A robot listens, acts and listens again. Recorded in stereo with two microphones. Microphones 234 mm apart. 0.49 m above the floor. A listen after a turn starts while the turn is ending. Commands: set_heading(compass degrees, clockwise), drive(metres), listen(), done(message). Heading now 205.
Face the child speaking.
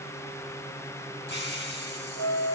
listen()
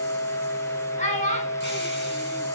set_heading(175)
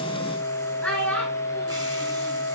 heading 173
done("Facing the child speaking.")